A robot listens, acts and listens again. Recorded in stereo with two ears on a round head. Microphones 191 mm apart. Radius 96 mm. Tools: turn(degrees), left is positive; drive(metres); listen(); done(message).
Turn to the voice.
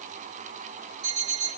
listen()
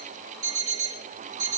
listen()
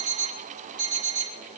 done("I can't make out anyone speaking, only an alarm clock.")